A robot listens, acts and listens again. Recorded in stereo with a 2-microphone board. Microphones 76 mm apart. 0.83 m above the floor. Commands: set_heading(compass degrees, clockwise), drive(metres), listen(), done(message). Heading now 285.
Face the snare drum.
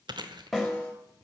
set_heading(255)
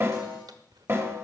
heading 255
set_heading(290)
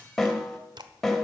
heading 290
done("Found it: a snare drum, straight ahead, 2 to 4 m away.")